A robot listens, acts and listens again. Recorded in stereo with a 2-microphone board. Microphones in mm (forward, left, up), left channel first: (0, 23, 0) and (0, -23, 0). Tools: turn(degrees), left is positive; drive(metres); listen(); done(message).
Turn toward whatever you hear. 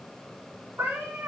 turn(degrees=-65)
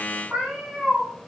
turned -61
done("Found it: a cat meowing, straight ahead, 2 to 4 m away.")